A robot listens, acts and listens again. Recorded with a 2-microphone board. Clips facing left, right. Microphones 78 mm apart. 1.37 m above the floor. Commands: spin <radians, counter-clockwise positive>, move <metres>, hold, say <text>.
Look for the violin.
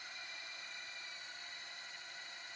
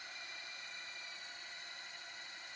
hold
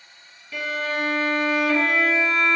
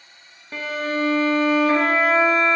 spin -0.70
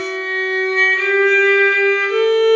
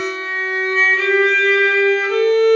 say Found it: a violin, straight ahead.